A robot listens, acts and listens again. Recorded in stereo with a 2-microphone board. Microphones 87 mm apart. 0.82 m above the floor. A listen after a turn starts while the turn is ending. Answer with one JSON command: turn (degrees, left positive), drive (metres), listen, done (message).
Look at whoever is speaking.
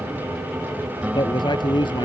{"turn": 60}
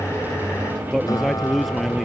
{"done": "Found it: a man speaking, straight ahead."}